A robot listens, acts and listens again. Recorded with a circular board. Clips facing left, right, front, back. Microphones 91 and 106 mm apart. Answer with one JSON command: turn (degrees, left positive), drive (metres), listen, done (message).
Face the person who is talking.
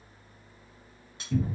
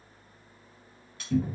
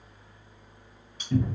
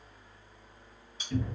{"listen": true}
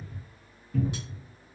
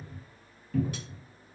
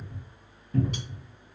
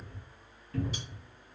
{"listen": true}
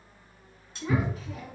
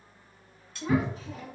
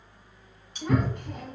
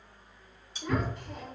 {"turn": -30}
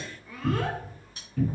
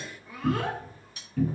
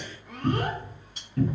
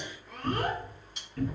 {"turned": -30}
{"turn": -15}
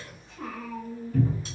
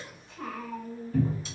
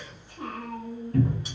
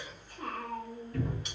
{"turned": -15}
{"done": "Found it: a child speaking, straight ahead."}